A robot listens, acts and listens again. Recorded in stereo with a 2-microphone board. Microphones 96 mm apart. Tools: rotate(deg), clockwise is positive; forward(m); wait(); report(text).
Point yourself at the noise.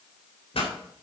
rotate(-90)
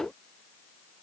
report("I heard a pop from this way, but can't make it out now.")